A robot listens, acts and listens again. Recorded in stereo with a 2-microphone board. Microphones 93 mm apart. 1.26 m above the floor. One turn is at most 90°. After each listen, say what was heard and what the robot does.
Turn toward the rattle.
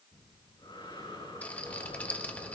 The rattle: about 15° left or 165° left. Turn 15° left.
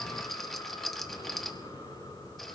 Found it: a rattle, straight ahead.